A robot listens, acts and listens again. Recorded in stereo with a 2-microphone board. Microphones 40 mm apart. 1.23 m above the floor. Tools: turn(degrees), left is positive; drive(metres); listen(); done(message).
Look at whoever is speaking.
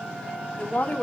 turn(degrees=45)
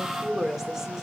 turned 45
turn(degrees=-10)
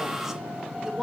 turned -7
turn(degrees=-10)
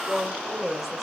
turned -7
done("Found it: a woman speaking, straight ahead.")